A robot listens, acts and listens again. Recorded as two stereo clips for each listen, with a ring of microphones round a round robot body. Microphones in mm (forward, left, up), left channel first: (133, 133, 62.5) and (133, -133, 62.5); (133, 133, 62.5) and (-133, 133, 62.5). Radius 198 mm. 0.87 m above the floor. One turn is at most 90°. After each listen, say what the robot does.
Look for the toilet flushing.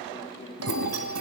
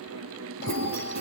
Turn 90° right.
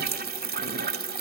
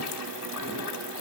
Turn 40° right.
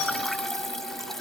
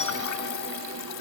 Facing the toilet flushing.